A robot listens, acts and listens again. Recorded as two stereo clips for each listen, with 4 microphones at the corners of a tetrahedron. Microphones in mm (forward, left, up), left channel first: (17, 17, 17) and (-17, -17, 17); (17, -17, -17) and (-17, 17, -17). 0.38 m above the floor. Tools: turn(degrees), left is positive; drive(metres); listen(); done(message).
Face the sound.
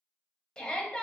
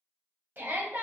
turn(degrees=110)
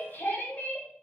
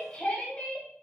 turn(degrees=15)
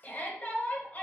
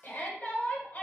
done("Found it: a shout, straight ahead.")